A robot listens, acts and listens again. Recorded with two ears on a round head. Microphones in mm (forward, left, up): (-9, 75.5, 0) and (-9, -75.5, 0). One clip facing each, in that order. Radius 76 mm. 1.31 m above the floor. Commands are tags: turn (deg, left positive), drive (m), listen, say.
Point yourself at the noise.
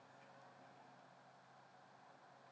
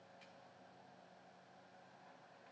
<listen/>
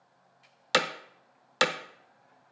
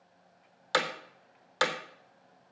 <turn deg="25"/>
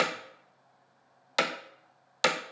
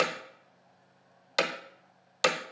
<say>Found it: hammering, straight ahead.</say>